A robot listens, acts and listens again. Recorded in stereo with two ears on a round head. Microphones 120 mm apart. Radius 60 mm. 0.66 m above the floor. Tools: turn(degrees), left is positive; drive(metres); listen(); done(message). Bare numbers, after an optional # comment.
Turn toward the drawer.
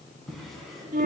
turn(30)
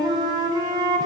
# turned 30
listen()
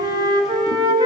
listen()
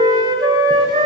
done("I heard a drawer, but can't make it out now. It was about 30° right or 150° left.")